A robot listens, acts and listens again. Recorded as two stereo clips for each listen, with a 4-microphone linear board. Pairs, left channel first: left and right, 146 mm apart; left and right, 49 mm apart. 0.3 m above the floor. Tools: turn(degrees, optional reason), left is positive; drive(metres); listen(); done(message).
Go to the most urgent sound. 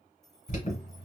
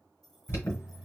turn(degrees=55, reason="The alarm: about 55° left or 125° left.")
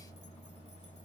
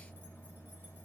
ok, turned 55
turn(degrees=60, reason="So it is at 60° left.")
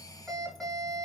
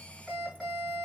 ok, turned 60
drive(metres=1.0)
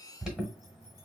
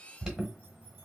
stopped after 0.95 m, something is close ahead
done("I am next to the alarm.")